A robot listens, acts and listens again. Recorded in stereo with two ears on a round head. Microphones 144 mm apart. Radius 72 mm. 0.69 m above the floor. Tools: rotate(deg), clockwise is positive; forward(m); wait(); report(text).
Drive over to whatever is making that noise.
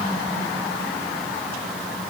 wait()
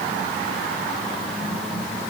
wait()
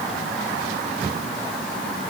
report("I can't make out anything to turn to.")